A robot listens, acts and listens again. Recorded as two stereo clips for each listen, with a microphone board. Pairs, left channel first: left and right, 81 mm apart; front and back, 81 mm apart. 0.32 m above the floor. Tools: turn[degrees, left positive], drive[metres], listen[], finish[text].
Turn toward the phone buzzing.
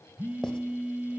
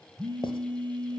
Thought: The phone buzzing: 165° right.
Action: turn[-165]
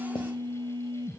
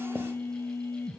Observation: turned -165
Thought: The phone buzzing is now 60° right.
Action: turn[-60]
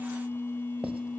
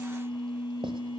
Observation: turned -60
Thought: The phone buzzing is now 25° left.
Action: turn[25]
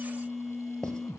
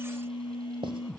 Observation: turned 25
Action: finish[Facing the phone buzzing.]